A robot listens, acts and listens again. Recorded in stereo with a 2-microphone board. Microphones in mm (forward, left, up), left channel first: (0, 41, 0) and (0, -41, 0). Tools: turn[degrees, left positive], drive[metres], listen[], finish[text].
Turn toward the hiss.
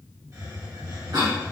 Thought: The hiss: about 50° right or 130° right.
Action: turn[-50]
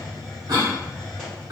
Action: finish[Found it: a hiss, straight ahead, 1 to 2 m away.]